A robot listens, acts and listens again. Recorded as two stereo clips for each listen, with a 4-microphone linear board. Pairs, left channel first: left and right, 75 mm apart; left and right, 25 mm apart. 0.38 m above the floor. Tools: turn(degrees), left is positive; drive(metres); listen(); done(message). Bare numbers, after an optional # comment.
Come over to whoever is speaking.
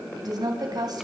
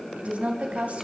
# The woman speaking: about 65° right or 115° right.
turn(-65)
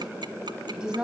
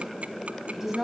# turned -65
# So it is at 15° right.
turn(-15)
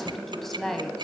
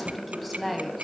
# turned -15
drive(1.0)
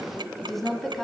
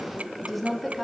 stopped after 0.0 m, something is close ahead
done("Blocked. The woman speaking is further on, straight ahead.")